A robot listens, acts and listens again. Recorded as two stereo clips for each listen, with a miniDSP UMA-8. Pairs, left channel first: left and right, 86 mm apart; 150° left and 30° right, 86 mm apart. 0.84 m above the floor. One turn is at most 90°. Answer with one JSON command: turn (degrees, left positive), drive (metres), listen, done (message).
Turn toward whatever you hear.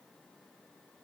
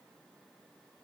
{"listen": true}
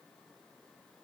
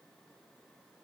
{"listen": true}
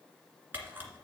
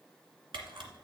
{"turn": -25}
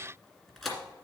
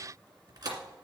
{"done": "Facing the camera shutter, 2 to 4 m away."}